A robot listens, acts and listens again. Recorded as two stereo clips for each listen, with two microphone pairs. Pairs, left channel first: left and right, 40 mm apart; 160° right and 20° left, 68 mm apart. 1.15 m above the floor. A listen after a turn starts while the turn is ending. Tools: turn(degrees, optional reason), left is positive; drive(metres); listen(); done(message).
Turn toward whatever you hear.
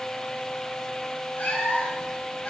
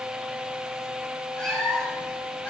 turn(degrees=135, reason="The cat meowing: 135° left.")
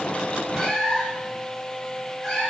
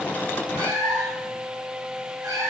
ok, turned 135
turn(degrees=15, reason="The cat meowing is now 15° left.")
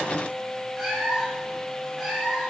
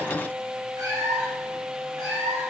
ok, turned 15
done("Found it: a cat meowing, straight ahead.")